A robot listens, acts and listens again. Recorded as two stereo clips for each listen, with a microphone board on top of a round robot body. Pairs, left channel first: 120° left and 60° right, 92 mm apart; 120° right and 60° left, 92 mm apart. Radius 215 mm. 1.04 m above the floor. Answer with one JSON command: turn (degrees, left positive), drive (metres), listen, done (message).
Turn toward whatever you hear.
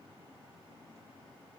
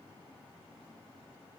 {"listen": true}
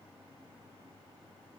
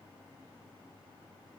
{"listen": true}
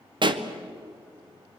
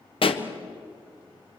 {"turn": -95}
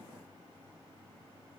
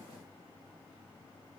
{"done": "Facing where the pop came from. I can't hear it now."}